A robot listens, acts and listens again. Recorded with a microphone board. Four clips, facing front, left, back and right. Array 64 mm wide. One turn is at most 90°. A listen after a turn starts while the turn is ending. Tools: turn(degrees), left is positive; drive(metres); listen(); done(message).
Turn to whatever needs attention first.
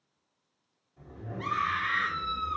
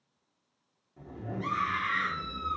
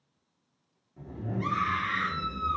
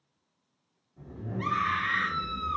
turn(degrees=-75)
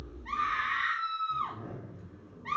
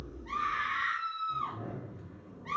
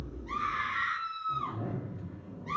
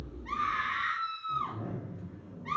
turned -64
turn(degrees=-10)
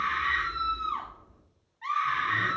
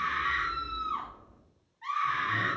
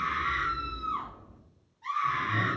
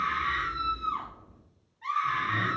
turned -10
done("Found it: a scream, straight ahead.")